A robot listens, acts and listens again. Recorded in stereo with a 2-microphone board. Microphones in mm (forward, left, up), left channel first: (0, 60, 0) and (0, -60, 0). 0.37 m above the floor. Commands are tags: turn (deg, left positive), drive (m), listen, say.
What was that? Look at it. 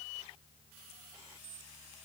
<listen/>
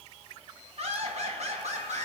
<turn deg="-70"/>
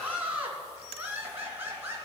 <turn deg="-20"/>
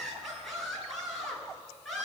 <say>Found it: laughter, straight ahead.</say>